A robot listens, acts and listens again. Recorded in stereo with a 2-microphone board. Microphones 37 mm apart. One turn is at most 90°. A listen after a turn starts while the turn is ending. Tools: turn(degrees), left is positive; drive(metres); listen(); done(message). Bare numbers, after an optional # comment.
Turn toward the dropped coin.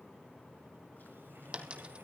# The dropped coin: about 25° right or 155° right.
turn(-25)
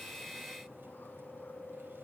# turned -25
listen()
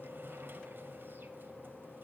done("I heard a dropped coin, but can't make it out now. It was about straight ahead or 130° right.")